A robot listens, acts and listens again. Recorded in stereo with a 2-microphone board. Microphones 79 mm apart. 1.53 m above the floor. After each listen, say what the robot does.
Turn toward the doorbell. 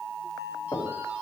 Keep listening.
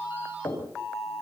Keep listening.
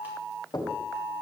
I can't make out a doorbell, only knocking.